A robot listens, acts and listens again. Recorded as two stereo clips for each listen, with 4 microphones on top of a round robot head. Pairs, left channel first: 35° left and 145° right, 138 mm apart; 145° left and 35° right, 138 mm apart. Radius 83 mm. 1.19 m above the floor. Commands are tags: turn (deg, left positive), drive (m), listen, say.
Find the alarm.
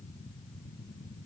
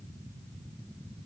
<listen/>
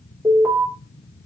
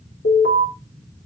<turn deg="145"/>
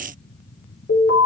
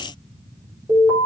<turn deg="35"/>
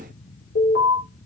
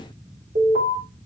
<turn deg="10"/>
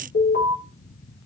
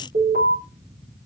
<say>Found it: an alarm, straight ahead, 2 to 4 m away.</say>